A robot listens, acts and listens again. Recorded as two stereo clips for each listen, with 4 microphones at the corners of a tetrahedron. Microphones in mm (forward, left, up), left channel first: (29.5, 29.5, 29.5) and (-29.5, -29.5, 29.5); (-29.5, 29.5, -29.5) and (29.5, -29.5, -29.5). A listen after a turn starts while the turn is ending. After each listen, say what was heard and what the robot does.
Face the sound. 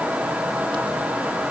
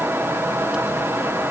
Keep listening.
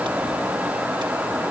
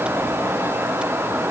Keep listening.
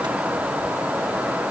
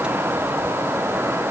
I can't make out anything.